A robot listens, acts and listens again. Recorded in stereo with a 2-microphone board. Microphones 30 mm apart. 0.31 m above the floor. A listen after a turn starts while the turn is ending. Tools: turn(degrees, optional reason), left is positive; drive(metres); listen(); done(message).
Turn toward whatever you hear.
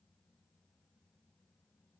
listen()
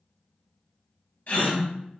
turn(degrees=60, reason="The gasp: about 60° left or 120° left.")
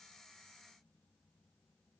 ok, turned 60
listen()
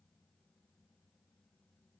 done("I heard a gasp, but can't make it out now. It was about straight ahead or 60° left.")